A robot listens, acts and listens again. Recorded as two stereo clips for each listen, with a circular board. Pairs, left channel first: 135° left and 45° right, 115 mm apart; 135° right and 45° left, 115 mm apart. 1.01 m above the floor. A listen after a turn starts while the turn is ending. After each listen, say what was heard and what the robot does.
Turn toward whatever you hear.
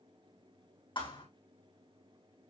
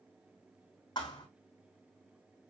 The thud: 175° left. Turn 175° left.
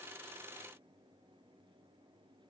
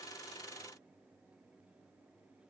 Facing where the thud came from. I can't hear it now.